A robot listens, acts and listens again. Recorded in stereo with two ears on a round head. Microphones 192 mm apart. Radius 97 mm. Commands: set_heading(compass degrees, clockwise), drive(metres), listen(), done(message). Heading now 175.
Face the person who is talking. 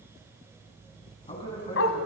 set_heading(150)
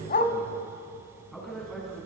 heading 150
done("Found it: a man speaking, straight ahead, over 4 m away.")